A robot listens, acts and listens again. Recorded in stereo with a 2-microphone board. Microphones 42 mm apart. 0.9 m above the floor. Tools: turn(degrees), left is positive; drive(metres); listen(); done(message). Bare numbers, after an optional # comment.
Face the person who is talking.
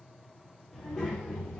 # The child speaking: about 25° left or 155° left.
turn(25)
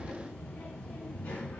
# So it is at 120° left.
turn(120)
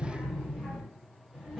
# The child speaking is now 10° right.
turn(-10)
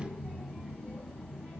done("Facing the child speaking.")